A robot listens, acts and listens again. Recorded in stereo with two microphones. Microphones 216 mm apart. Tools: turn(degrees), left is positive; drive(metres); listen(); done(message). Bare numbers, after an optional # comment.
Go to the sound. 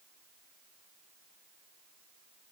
listen()
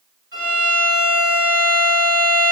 # The violin: about 70° right or 110° right.
turn(-70)
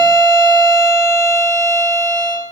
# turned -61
# So it is at 10° right.
turn(-10)
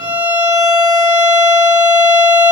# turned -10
drive(1.0)
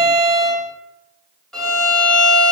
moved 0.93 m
drive(1.0)
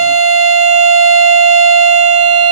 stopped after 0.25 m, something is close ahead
done("Arrived at the violin, straight ahead.")